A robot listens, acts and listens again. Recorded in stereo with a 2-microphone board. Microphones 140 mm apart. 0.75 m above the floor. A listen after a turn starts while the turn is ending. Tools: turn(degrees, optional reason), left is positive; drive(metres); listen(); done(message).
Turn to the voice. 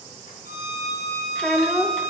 turn(degrees=30)
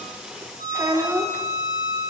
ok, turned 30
turn(degrees=-20, reason="So it is at 20° right.")
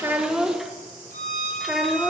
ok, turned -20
done("Found it: a child speaking, straight ahead.")